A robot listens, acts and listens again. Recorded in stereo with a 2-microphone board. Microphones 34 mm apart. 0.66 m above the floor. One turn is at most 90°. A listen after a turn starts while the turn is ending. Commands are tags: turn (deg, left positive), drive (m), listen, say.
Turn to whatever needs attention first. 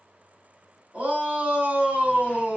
<turn deg="-55"/>
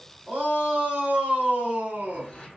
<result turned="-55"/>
<turn deg="-65"/>
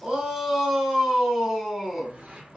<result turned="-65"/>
<say>Facing the shout, 2 to 4 m away.</say>